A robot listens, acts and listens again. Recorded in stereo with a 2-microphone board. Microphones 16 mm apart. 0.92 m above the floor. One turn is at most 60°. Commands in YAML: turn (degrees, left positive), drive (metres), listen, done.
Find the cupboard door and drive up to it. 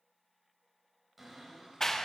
turn: -30
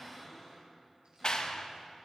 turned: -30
turn: 15
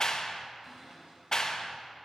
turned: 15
drive: 1.0
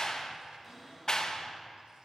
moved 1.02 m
drive: 1.0
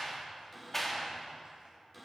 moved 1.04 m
drive: 1.0
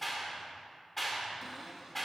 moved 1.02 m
drive: 1.0
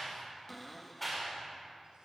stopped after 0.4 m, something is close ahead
turn: 10
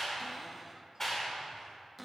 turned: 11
done: "I am next to the cupboard door."